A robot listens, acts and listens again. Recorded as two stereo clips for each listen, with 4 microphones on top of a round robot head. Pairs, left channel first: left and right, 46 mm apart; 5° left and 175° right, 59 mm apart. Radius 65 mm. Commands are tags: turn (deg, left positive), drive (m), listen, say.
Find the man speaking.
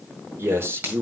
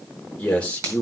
<turn deg="-60"/>
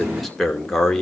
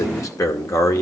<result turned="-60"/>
<turn deg="10"/>
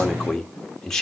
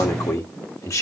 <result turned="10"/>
<turn deg="15"/>
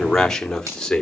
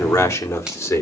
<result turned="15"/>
<turn deg="20"/>
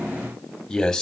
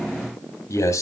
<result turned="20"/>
<turn deg="10"/>
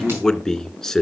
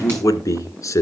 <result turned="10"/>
<turn deg="10"/>
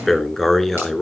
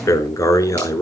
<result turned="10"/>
<say>Facing the man speaking, 2 to 4 m away.</say>